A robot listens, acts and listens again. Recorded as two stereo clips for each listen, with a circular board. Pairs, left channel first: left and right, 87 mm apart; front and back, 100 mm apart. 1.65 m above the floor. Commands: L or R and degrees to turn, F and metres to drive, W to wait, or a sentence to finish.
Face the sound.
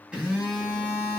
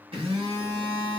R170
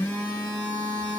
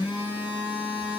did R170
L25
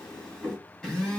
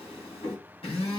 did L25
Facing the phone buzzing, 2 to 4 m away.